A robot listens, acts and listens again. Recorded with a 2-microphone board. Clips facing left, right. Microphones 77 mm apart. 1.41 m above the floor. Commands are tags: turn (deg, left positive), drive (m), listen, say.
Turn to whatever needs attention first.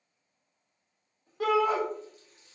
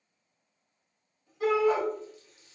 <turn deg="90"/>
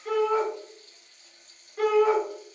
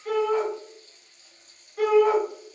<say>Facing the shout, 1 to 2 m away.</say>